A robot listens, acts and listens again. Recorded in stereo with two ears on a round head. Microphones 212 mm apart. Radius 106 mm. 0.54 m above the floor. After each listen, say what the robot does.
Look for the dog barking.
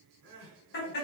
Keep listening.
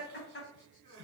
Keep listening.
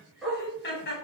Turn 30° left.
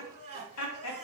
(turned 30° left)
Keep listening.
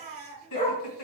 Turn 150° left.
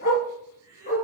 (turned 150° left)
Turn 35° left.
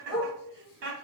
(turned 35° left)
Facing the dog barking.